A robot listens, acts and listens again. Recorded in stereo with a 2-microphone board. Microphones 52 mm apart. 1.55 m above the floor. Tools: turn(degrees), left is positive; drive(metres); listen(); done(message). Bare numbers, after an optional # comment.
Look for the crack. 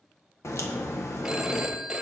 # The crack: about 60° left or 120° left.
turn(60)
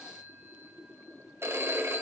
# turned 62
listen()
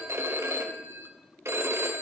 done("I heard a crack, but can't make it out now. It was about straight ahead or 55° left.")